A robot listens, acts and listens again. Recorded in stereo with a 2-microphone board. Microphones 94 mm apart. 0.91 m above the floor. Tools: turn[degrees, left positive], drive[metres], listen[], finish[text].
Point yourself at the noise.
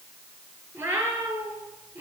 Thought: The cat meowing: about 20° right or 160° right.
Action: turn[-20]
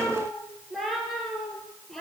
Action: finish[Found it: a cat meowing, straight ahead.]